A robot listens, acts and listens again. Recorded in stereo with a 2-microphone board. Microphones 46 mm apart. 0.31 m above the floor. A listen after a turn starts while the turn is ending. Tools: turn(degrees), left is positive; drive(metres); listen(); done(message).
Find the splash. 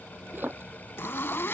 turn(degrees=-50)
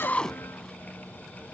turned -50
listen()
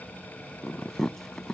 done("I heard a splash, but can't make it out now. It was about straight ahead or 80° right.")